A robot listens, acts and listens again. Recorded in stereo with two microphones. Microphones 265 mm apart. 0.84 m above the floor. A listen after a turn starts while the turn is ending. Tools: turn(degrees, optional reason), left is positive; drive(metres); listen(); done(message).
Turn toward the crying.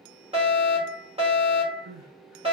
turn(degrees=-90)
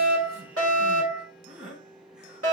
done("Facing the crying, 2 to 4 m away.")